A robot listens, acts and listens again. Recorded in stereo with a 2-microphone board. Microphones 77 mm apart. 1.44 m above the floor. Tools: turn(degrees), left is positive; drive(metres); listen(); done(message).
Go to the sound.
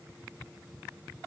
listen()
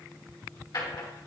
turn(degrees=65)
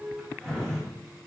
turn(degrees=10)
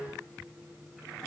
listen()
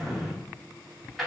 drive(metres=1.0)
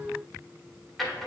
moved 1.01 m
drive(metres=1.0)
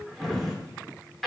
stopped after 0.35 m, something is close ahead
done("Arrived at the drawer, straight ahead.")